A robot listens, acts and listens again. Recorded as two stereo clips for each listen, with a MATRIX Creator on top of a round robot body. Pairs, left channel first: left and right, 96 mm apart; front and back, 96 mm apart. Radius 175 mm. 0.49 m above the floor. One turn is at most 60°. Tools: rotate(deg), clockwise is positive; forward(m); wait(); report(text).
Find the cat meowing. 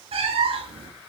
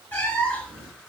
rotate(60)
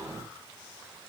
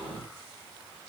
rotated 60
rotate(20)
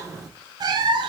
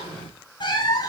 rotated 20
rotate(50)
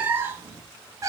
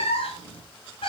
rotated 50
rotate(30)
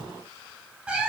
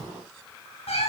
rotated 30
rotate(10)
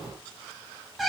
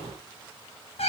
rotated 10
report("Facing the cat meowing.")